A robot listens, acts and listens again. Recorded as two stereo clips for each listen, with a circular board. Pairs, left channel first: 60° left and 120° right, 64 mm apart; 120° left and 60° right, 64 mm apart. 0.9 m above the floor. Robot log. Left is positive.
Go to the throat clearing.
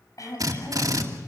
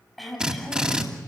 note: The throat clearing: 30° left.
cmd yaw +30
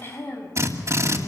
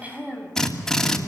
note: The throat clearing is now 10° left.
cmd yaw +10
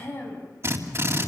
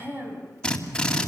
cmd fwd 1.0
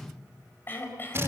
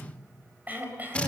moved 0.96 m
cmd fwd 1.0
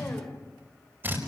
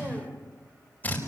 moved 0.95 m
cmd fwd 1.0
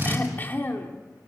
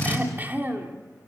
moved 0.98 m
cmd fwd 1.0
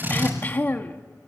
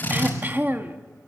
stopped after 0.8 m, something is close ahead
end: I am next to the throat clearing.